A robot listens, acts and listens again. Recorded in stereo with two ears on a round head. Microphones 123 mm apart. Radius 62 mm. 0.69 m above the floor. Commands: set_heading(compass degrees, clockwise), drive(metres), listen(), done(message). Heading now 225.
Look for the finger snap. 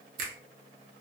set_heading(290)
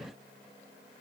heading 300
listen()
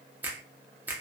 set_heading(315)
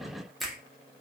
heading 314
done("Found it: a finger snap, straight ahead.")